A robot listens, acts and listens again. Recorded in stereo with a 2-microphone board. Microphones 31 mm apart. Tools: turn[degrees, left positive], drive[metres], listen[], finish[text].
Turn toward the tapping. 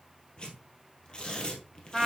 Action: listen[]
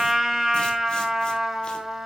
Action: listen[]
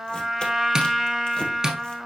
Thought: The tapping: about 30° right or 150° right.
Action: turn[-30]
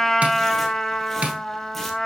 Thought: So it is at 120° right.
Action: turn[-120]
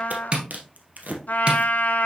Thought: The tapping is now 35° right.
Action: turn[-35]
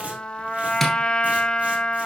Thought: The tapping is now 10° left.
Action: turn[10]
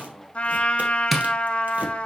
Action: finish[Found it: tapping, straight ahead.]